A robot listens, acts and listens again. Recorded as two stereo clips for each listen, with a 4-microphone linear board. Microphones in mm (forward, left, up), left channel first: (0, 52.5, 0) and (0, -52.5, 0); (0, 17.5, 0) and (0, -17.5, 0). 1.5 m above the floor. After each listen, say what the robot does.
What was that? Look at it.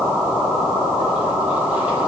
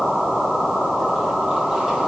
Keep listening.
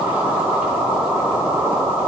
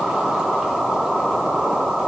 Keep listening.
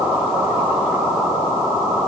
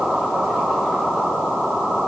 I can't make out anything to turn to.